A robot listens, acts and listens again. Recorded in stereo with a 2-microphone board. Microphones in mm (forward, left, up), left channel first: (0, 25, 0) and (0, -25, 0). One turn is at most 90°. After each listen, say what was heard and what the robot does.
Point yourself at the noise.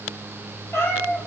The cat meowing: about 65° left or 115° left. Turn 65° left.
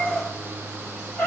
So it is at 45° left. Turn 45° left.
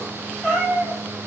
Found it: a cat meowing, straight ahead.